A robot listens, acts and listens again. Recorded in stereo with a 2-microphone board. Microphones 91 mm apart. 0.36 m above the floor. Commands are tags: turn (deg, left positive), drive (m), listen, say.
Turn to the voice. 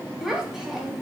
<turn deg="-30"/>
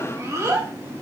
<turn deg="-145"/>
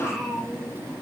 <say>Found it: a child speaking, straight ahead, 1 to 2 m away.</say>